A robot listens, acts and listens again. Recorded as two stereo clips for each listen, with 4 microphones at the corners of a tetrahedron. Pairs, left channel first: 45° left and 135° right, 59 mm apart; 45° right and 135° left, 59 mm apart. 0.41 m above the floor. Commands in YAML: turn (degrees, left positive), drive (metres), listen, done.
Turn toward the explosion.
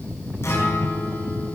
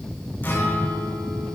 listen: true
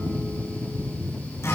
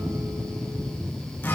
listen: true
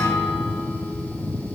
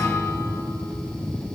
done: "I can't make out an explosion to turn to."